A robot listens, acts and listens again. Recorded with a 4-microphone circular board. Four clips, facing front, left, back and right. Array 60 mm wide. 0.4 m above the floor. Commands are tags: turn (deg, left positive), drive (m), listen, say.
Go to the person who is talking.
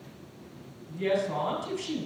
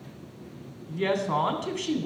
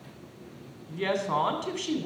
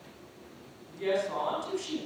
<turn deg="135"/>
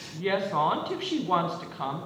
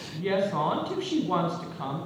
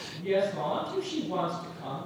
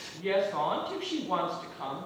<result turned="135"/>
<turn deg="10"/>
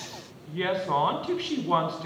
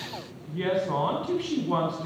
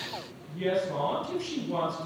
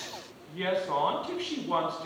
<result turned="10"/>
<drive m="1.0"/>
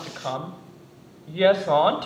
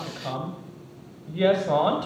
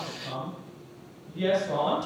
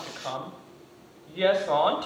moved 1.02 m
<turn deg="-10"/>
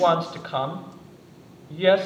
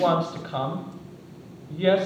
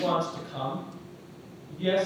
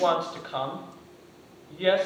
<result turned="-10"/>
<drive m="1.0"/>
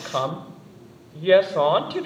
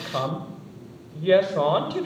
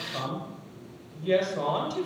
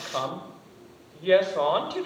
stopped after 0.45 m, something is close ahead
<say>Arrived at the woman speaking, straight ahead.</say>